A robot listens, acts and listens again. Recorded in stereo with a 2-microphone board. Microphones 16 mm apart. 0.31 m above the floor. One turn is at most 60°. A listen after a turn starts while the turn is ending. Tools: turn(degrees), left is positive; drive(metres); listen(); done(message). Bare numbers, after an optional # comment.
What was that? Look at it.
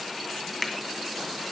turn(30)
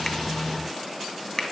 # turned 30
# So it is at 140° left.
turn(60)
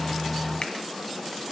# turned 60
# Nothing new. It was at 80° left.
turn(60)
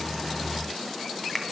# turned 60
# The finger snap is now 10° left.
turn(10)
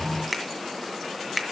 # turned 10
done("Facing the finger snap.")